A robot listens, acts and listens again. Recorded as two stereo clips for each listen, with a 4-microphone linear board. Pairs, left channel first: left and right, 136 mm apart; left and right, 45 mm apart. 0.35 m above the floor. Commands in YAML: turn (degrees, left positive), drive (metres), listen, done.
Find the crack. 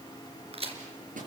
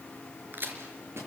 turn: -45
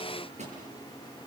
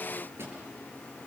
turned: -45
listen: true
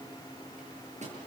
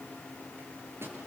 done: "I heard a crack, but can't make it out now. It was about straight ahead or 90° right."